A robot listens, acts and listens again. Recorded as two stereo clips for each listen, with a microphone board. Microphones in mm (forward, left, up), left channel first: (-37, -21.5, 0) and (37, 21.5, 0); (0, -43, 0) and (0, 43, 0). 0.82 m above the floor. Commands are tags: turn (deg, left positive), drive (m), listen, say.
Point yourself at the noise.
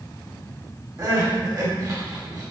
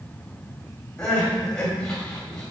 <turn deg="-10"/>
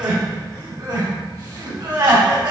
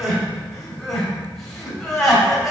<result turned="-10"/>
<say>Facing the crying, 2 to 4 m away.</say>